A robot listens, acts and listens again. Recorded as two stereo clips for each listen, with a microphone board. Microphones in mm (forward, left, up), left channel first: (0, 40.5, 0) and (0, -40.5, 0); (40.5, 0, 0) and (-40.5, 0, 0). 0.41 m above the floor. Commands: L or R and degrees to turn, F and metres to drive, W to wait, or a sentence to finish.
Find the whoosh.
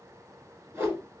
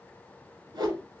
R150
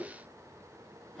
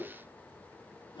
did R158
L10
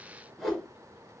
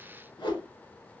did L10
Facing the whoosh.